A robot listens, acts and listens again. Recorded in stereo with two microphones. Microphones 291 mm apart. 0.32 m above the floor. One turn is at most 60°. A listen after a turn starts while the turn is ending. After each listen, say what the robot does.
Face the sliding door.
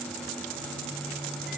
Keep listening.
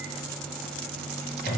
Keep listening.
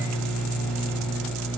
I can't make out a sliding door, only a microwave.